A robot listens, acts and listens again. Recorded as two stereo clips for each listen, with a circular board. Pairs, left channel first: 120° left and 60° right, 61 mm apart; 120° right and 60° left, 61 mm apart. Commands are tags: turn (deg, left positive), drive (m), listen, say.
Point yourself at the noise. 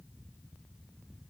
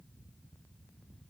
<listen/>
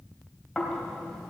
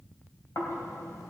<turn deg="-155"/>
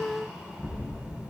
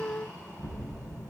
<turn deg="10"/>
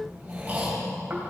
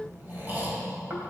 <say>Found it: snoring, straight ahead, 2 to 4 m away.</say>